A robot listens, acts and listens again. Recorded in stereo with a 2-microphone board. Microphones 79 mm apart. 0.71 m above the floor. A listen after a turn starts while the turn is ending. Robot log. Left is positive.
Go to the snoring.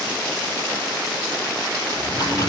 cmd yaw +30
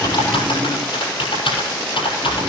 note: So it is at 30° right.
cmd yaw -30
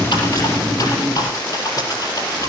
cmd fwd 1.0
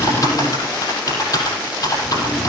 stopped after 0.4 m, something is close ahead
end: Something is in my way. I am facing the snoring but have not reached it.